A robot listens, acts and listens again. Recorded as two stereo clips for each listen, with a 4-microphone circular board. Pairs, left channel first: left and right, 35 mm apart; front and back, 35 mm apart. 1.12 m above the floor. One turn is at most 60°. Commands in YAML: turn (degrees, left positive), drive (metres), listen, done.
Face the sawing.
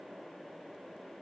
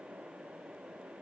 listen: true
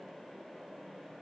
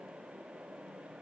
listen: true
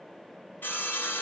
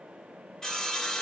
turn: 60
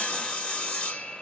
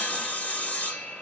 turn: 25
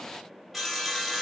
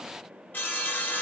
done: "Facing the sawing, 1 to 2 m away."